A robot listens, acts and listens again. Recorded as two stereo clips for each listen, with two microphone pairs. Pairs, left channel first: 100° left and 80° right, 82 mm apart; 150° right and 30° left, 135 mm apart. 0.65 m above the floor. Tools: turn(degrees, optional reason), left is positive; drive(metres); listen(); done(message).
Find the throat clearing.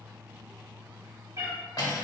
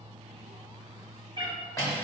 listen()
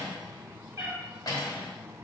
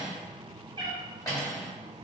listen()
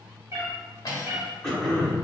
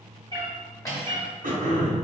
turn(degrees=20, reason="The throat clearing: 20° left.")
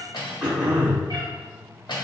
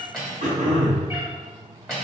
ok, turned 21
done("Found it: throat clearing, straight ahead, 1 to 2 m away.")